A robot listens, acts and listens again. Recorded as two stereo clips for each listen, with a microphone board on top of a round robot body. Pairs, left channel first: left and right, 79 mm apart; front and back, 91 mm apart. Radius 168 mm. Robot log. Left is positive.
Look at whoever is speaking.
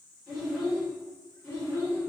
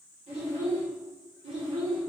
note: The child speaking: 160° left.
cmd yaw +160
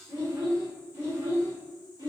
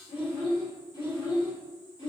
note: The child speaking is now 45° right.
cmd yaw -45
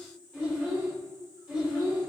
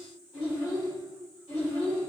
end: Found it: a child speaking, straight ahead, 2 to 4 m away.